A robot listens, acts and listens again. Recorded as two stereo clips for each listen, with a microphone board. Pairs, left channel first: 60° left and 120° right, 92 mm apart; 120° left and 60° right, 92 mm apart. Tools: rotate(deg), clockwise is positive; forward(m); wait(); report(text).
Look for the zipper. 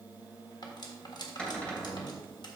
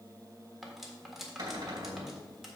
wait()
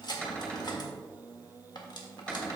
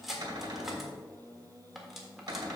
wait()
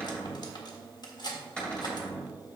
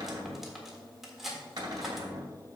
report("I can't make out a zipper, only cutlery clinking and a cupboard door.")